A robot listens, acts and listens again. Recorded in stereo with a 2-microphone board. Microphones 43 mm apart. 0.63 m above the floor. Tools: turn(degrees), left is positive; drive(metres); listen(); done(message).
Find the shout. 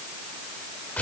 listen()
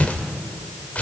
listen()
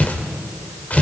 done("I can't make out a shout to turn to.")